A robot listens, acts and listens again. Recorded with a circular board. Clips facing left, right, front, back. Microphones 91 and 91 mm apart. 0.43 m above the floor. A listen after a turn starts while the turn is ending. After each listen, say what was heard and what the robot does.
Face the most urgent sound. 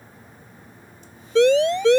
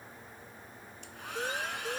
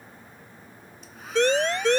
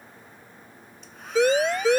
The siren: 95° left. Turn 95° left.
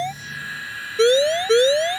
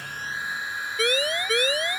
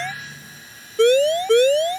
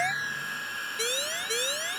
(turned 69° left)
The siren is now 25° left. Turn 25° left.
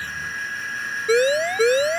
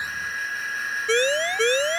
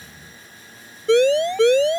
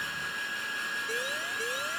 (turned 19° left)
The siren is now 10° left. Turn 10° left.
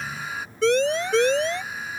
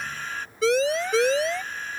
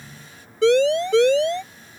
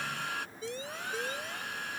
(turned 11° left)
Found it: a siren, straight ahead.